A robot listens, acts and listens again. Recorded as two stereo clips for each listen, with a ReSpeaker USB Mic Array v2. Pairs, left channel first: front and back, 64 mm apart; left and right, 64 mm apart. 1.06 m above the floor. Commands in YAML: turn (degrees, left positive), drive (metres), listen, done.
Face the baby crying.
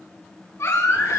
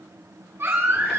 turn: -40
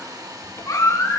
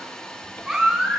turn: -10
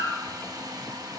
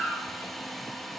done: "Facing the baby crying."